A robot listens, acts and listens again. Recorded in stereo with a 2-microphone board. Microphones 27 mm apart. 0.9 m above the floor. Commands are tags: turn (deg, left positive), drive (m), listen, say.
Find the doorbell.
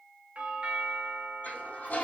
<turn deg="-55"/>
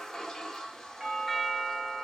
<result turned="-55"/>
<turn deg="-10"/>
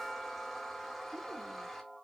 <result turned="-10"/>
<say>Found it: a doorbell, straight ahead.</say>